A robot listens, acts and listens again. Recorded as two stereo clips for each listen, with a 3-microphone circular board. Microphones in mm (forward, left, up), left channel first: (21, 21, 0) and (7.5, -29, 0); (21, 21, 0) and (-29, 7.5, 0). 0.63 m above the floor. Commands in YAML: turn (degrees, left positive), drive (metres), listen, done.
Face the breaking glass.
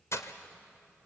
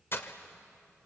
turn: 55
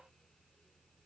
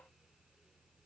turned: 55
done: "Facing where the breaking glass came from. I can't hear it now."